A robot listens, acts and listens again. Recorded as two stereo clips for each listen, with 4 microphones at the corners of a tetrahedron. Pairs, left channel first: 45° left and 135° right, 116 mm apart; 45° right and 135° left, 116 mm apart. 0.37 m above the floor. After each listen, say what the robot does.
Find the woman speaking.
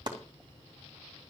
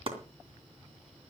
Keep listening.
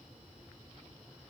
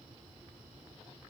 Keep listening.
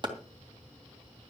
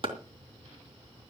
I can't make out a woman speaking to turn to.